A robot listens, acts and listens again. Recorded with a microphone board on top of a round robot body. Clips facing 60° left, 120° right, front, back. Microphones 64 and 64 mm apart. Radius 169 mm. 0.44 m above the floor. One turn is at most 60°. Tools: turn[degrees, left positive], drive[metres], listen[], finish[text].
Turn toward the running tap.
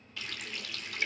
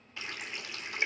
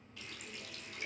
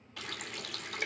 Thought: The running tap: 175° left.
Action: turn[60]
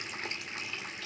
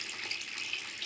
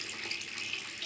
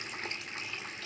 Thought: The running tap is now 120° left.
Action: turn[60]
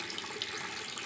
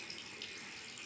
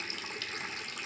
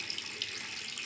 Thought: The running tap is now 50° left.
Action: turn[50]
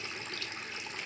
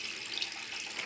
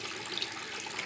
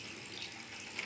Action: finish[Found it: a running tap, straight ahead, 1 to 2 m away.]